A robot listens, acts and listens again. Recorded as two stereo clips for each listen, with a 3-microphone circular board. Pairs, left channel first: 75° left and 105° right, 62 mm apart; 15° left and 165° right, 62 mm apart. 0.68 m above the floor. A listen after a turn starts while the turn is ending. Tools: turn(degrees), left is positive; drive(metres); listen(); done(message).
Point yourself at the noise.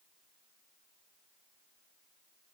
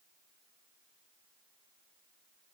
listen()
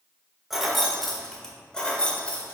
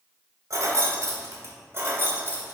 turn(degrees=145)
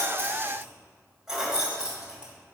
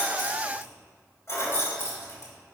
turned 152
turn(degrees=-30)
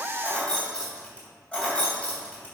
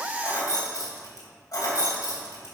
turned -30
done("Found it: keys jangling, straight ahead, 2 to 4 m away.")